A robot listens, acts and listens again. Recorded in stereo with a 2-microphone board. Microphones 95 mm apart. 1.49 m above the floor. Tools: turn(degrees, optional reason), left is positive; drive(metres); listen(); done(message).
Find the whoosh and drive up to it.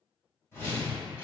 turn(degrees=30, reason="The whoosh: about 30° left or 150° left.")
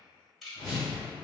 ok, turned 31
turn(degrees=120, reason="So it is at 120° left.")
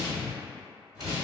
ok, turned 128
turn(degrees=-10, reason="The whoosh is now 10° right.")
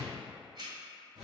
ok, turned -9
drive(metres=1.0)
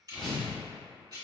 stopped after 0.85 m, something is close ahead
done("Arrived at the whoosh, straight ahead.")